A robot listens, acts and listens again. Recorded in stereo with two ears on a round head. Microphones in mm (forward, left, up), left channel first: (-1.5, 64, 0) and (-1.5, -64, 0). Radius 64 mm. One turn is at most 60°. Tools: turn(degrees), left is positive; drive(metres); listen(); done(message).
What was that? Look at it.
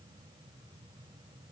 listen()
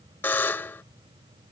turn(degrees=30)
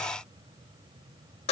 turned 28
turn(degrees=60)
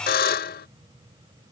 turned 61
turn(degrees=60)
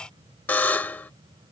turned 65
turn(degrees=15)
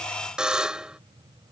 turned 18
done("Facing the buzzer.")